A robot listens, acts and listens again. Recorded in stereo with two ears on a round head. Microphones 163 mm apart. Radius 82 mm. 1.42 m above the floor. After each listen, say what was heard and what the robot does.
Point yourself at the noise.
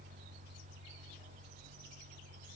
Keep listening.
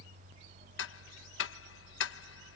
The ticking: about 75° left or 105° left. Turn 75° left.
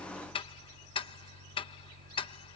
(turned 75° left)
So it is at 30° left. Turn 30° left.
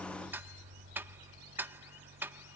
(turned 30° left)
The ticking is now 10° right. Turn 10° right.
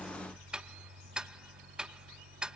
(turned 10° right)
Found it: ticking, straight ahead.